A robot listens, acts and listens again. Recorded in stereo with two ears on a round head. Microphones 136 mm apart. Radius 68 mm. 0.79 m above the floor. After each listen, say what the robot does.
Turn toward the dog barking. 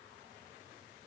Keep listening.
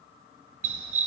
Turn 55° right.
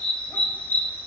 Turn 15° left.
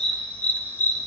Turn 20° left.
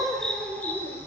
Turn 15° left.
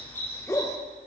Turn 25° left.
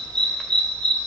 Found it: a dog barking, straight ahead.